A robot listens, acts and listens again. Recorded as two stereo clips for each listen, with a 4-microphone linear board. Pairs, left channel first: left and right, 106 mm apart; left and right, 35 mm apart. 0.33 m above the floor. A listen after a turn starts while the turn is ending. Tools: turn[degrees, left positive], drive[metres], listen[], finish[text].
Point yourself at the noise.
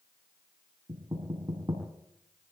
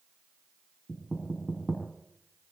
Thought: The knocking: about 45° right or 135° right.
Action: turn[-45]
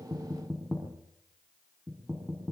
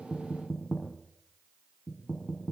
Action: finish[Found it: knocking, straight ahead, over 4 m away.]